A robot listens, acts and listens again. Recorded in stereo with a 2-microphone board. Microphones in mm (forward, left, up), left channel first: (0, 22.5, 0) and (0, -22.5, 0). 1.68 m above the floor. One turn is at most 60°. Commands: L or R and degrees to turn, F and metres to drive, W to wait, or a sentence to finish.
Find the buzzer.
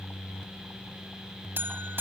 R50
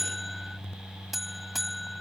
Facing the buzzer.